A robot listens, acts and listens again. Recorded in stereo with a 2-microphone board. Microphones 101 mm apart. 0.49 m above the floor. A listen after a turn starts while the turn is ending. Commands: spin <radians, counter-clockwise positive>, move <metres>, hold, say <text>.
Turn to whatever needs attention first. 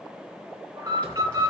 spin -0.79
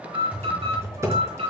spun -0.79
spin -1.66
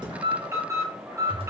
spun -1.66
spin -0.52
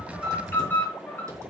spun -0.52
spin 0.35
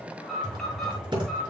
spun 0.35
say Facing the alarm, over 4 m away.